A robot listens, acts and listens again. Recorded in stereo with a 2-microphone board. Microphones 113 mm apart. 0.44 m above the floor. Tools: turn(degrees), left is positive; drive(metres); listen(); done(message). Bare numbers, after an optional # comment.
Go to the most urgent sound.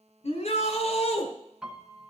turn(90)
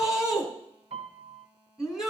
drive(1.0)
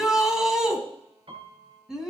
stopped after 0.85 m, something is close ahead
done("Something is in my way. I am facing the shout but have not reached it.")